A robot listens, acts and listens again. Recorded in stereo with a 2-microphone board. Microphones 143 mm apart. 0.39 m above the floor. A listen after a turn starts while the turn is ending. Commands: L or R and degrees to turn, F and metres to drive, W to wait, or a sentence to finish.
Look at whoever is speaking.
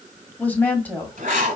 L30
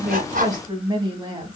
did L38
R35
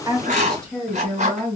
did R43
Facing the woman speaking.